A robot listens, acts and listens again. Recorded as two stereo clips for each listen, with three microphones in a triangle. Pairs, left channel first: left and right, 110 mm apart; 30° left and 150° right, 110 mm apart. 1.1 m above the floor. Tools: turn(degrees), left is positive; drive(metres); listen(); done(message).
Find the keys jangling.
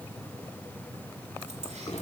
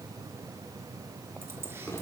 listen()
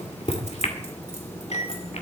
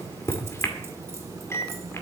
listen()
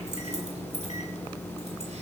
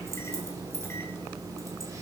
turn(degrees=-90)
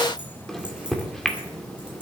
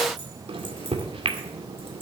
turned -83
listen()
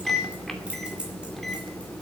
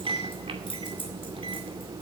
turn(degrees=-10)
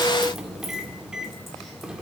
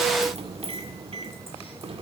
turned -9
listen()
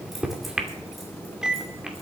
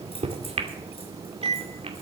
listen()
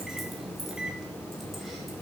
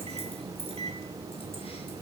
done("I heard keys jangling from this way, but can't make it out now.")